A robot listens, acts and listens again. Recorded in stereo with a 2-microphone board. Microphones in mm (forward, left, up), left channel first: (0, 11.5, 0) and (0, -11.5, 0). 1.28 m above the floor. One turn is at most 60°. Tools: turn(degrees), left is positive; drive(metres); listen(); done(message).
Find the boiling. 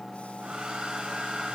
listen()
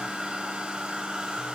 listen()
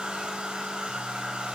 done("I can't make out boiling to turn to.")